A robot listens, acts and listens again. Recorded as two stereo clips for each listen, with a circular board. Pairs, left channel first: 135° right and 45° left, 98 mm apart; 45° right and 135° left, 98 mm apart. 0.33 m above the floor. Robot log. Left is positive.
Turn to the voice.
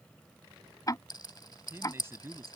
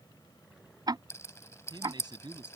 note: The man speaking: 105° left.
cmd yaw +105
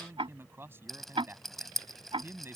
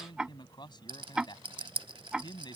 note: The man speaking is now 15° right.
cmd yaw -15
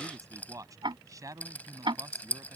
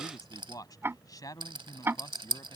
end: Found it: a man speaking, straight ahead.